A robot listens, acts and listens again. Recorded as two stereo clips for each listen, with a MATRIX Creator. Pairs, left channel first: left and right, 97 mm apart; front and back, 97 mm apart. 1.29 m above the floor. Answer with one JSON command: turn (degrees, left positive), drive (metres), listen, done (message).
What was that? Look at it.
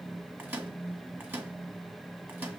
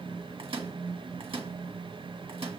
{"turn": -155}
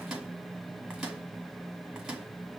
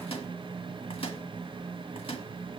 {"turn": -10}
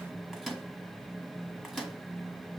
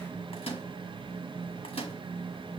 {"done": "Facing the microwave, 1 to 2 m away."}